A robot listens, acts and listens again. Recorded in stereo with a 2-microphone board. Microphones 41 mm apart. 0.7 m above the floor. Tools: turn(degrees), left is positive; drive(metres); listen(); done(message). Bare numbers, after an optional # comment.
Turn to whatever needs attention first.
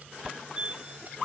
# The fire alarm: about 20° right or 160° right.
turn(-20)
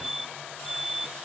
# So it is at 10° right.
turn(-10)
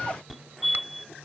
done("Facing the fire alarm.")